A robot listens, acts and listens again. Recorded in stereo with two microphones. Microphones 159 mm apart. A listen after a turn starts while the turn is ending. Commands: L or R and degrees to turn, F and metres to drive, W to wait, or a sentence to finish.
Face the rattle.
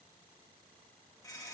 W
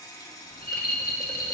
L90
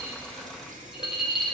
Facing the rattle, 1 to 2 m away.